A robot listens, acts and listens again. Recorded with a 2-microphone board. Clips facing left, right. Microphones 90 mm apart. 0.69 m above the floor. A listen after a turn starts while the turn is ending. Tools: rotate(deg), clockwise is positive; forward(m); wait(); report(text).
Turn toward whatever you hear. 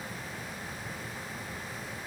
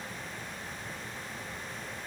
wait()
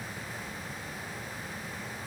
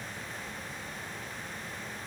wait()
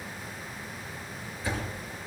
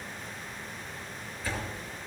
rotate(-30)
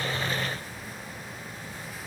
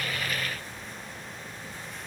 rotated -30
wait()
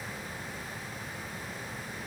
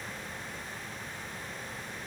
report("I heard a door slam, but can't make it out now. It was about 20° right or 140° left.")